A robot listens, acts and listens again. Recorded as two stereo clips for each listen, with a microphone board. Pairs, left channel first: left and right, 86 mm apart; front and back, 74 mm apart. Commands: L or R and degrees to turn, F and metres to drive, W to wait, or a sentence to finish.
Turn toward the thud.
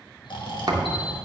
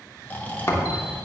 R50
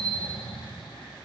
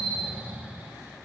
Facing where the thud came from. I can't hear it now.